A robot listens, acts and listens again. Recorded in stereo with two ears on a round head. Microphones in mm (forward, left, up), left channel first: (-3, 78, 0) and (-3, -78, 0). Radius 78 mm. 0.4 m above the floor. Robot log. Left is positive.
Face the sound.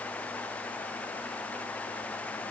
cmd idle
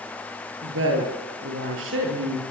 cmd yaw -90
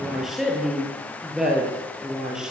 end: Found it: a woman speaking, straight ahead, over 4 m away.